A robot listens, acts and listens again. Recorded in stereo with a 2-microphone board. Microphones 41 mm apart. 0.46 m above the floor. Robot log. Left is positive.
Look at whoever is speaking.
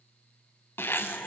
cmd idle
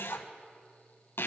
cmd idle
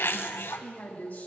note: The woman speaking: about 40° left or 140° left.
cmd yaw +40
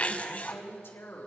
note: So it is at 95° left.
cmd yaw +95
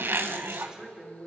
note: The woman speaking is now 15° right.
cmd yaw -15
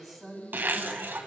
end: Found it: a woman speaking, straight ahead, 2 to 4 m away.